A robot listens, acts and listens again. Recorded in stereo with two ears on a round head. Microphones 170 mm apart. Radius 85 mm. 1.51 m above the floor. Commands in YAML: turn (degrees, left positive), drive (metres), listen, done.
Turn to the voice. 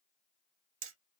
listen: true
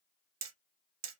listen: true
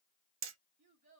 turn: -35
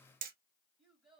done: "Found it: a child speaking, straight ahead, 2 to 4 m away."